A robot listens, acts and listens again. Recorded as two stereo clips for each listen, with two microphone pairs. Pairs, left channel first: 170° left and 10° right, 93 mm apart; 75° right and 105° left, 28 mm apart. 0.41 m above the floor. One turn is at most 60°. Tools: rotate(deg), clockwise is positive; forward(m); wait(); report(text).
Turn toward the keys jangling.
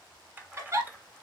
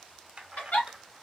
rotate(-55)
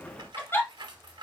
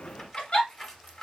report("Facing the keys jangling, 1 to 2 m away.")